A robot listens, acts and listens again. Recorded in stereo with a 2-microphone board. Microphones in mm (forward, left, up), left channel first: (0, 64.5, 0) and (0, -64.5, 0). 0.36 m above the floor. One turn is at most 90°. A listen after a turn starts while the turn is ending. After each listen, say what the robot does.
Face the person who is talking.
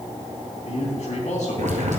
Turn 65° left.
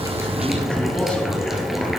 Keep listening.
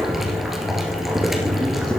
Keep listening.
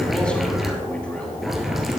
Turn 10° left.
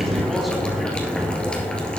Keep listening.
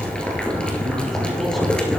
Keep listening.
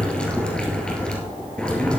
Facing where the man speaking came from. I can't hear it now.